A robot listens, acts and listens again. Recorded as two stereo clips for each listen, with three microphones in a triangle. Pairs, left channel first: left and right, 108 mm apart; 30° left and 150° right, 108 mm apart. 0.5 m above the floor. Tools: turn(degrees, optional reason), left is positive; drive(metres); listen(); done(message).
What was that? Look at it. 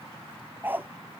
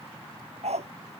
turn(degrees=-160, reason="The dog barking: 160° right.")
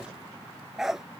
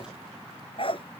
done("Facing the dog barking.")